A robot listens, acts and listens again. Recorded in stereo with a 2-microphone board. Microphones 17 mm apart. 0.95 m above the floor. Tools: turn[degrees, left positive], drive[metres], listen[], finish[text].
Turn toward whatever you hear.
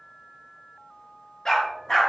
Thought: The dog barking: about 45° left or 135° left.
Action: turn[45]
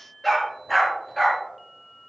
Thought: So it is at 10° left.
Action: turn[10]
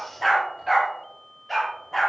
Action: finish[Facing the dog barking.]